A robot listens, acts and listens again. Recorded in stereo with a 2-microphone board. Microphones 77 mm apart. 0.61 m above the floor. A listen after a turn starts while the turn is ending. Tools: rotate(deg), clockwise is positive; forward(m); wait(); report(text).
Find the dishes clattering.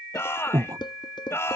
rotate(-90)
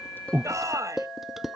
report("Found it: dishes clattering, straight ahead.")